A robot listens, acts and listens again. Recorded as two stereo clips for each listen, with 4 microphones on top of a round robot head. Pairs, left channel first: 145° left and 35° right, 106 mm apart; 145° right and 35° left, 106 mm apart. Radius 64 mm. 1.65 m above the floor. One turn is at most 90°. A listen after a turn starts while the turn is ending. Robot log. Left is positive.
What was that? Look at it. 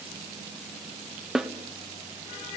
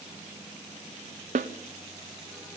note: The snare drum: 50° left.
cmd yaw +50
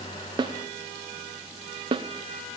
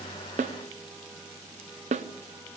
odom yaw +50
note: The snare drum is now 15° left.
cmd yaw +15
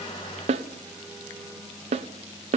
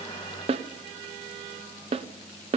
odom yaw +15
end: Facing the snare drum.